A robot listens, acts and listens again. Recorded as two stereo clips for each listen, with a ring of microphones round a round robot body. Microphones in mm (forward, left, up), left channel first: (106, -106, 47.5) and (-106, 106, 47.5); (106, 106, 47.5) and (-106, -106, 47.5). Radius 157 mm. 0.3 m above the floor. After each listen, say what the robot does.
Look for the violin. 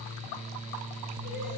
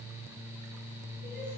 Keep listening.
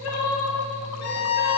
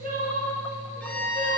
Turn 40° right.
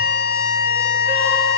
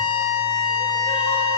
Found it: a violin, straight ahead.